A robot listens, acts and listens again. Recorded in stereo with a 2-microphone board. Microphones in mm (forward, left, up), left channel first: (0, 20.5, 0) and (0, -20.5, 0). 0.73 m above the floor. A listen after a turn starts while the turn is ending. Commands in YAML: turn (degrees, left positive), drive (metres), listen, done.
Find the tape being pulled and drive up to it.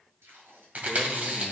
turn: -90
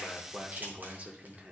listen: true
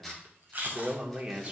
drive: 1.0
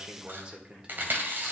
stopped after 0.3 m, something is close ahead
listen: true
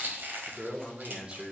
listen: true
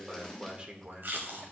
done: "Something is in my way. I am facing the tape being pulled but have not reached it."